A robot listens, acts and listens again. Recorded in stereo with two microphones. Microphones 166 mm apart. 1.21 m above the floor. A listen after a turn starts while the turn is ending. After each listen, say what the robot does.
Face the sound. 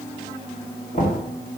Turn 50° left.
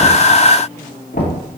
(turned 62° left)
Turn 70° left.
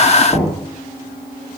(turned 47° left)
Turn 20° left.
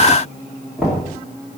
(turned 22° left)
Found it: knocking, straight ahead.